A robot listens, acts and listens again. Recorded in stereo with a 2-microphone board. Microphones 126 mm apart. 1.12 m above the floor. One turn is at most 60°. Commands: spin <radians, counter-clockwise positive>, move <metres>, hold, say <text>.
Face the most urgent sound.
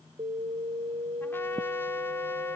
spin -0.96
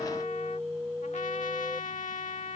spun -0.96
say Found it: an alarm, straight ahead.